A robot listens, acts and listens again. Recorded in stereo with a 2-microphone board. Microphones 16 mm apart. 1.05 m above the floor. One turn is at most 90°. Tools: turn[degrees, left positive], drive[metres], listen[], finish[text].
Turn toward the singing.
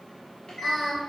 Thought: The singing: about 25° left or 155° left.
Action: turn[25]
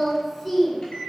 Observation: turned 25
Action: turn[30]
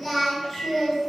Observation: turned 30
Action: turn[30]
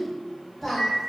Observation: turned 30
Action: finish[Found it: singing, straight ahead, 1 to 2 m away.]